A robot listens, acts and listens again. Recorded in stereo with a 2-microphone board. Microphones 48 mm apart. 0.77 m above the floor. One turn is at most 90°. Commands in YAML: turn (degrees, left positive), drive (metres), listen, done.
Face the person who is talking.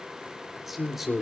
turn: -30
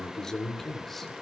done: "Found it: a man speaking, straight ahead."